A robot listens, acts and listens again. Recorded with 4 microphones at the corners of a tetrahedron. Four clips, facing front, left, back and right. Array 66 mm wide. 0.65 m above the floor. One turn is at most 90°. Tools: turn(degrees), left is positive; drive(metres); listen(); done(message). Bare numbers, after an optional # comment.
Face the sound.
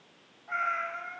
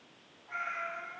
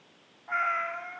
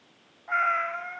# The cat meowing: 85° right.
turn(-85)
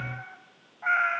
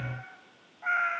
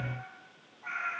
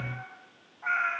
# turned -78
# The cat meowing is now 10° left.
turn(10)
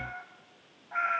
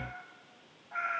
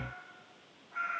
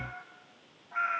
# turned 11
# The cat meowing is now 10° left.
turn(10)
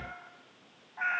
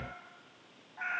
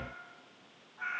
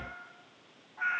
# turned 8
done("Found it: a cat meowing, straight ahead.")